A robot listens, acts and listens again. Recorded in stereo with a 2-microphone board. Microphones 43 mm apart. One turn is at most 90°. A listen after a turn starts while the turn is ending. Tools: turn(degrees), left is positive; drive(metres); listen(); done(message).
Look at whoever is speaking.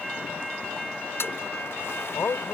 turn(degrees=70)
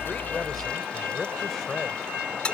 done("Facing the man speaking.")